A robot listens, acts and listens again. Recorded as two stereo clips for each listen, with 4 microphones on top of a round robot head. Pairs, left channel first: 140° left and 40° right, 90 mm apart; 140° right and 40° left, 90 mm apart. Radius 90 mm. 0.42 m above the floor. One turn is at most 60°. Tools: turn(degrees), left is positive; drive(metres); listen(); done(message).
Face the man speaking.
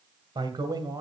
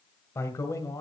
turn(degrees=-60)
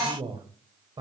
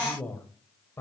turn(degrees=-60)
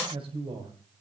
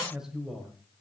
turn(degrees=-50)
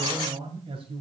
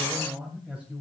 turn(degrees=-40)
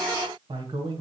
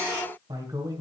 done("Found it: a man speaking, straight ahead.")